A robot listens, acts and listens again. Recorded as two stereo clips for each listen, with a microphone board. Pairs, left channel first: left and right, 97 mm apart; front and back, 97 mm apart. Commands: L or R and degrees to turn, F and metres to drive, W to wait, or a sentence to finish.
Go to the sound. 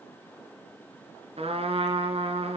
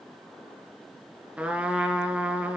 R100
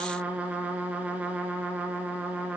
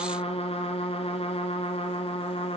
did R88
R15
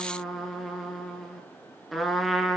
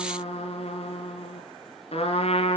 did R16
F1.0
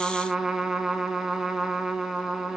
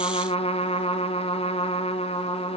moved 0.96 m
F1.0
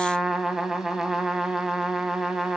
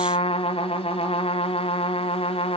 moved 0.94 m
F1.0
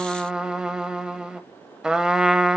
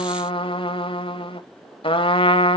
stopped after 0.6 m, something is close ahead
R10
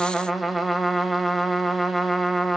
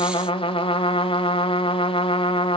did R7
Arrived at the trumpet, straight ahead.